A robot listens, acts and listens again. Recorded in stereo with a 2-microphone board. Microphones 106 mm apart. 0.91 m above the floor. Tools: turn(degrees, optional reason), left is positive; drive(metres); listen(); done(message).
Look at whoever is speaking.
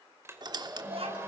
turn(degrees=-65, reason="The child speaking: about 65° right or 115° right.")
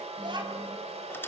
turn(degrees=-45, reason="So it is at 45° right.")
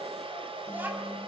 turn(degrees=-15, reason="The child speaking is now 15° right.")
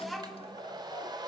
done("Found it: a child speaking, straight ahead.")